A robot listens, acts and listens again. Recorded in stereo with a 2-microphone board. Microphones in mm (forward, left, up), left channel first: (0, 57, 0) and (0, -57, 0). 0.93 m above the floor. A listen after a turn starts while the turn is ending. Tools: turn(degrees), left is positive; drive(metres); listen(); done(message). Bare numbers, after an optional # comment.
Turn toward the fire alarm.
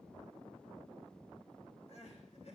listen()
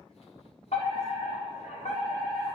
# The fire alarm: about 70° left or 110° left.
turn(70)
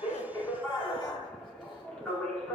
# So it is at 10° left.
turn(10)
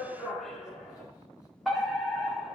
done("Found it: a fire alarm, straight ahead, over 4 m away.")